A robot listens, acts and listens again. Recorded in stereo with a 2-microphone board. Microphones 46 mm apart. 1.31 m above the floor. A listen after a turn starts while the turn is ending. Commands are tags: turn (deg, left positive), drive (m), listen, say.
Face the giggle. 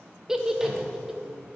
<turn deg="-30"/>
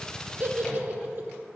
<turn deg="-130"/>
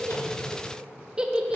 <turn deg="-20"/>
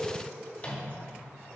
<listen/>
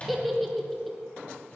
<say>Facing the giggle.</say>